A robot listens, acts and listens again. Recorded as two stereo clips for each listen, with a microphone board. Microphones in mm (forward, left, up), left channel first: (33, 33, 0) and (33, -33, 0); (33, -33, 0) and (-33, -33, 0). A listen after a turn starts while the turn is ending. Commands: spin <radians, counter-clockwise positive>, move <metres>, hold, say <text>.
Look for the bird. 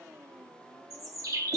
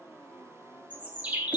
spin -2.01
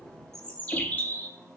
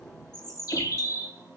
spin 0.44
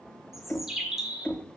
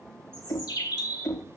say Facing the bird, 1 to 2 m away.